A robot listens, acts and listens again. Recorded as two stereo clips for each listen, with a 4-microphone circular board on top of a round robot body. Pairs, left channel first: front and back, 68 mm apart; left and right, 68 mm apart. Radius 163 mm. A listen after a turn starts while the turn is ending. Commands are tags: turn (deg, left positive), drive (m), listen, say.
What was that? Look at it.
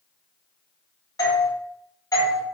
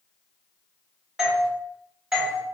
<turn deg="-10"/>
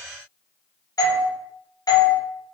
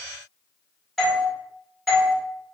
<say>Facing the doorbell, 1 to 2 m away.</say>